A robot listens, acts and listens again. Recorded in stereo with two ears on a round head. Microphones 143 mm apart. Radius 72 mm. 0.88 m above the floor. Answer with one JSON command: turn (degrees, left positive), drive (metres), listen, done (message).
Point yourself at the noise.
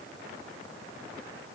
{"listen": true}
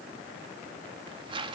{"turn": -30}
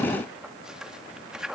{"done": "Facing the tearing paper, 1 to 2 m away."}